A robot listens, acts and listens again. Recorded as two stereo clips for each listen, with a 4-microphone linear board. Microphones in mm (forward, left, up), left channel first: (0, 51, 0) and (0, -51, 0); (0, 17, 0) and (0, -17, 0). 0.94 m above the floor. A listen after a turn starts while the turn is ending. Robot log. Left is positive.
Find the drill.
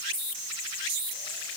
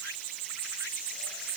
cmd idle
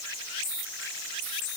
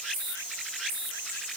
cmd idle
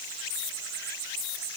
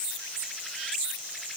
end: I can't make out a drill to turn to.